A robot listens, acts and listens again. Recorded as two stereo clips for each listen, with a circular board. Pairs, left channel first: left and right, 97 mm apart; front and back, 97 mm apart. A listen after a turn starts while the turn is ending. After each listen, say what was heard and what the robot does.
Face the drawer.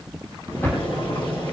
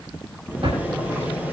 The drawer: 155° left. Turn 155° left.
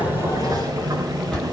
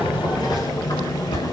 Found it: a drawer, straight ahead, over 4 m away.